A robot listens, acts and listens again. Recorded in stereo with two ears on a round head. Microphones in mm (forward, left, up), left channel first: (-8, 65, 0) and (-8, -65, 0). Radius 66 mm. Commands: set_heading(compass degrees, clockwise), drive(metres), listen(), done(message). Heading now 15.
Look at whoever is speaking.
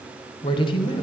set_heading(345)
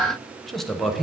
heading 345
done("Found it: a man speaking, straight ahead, under 1 m away.")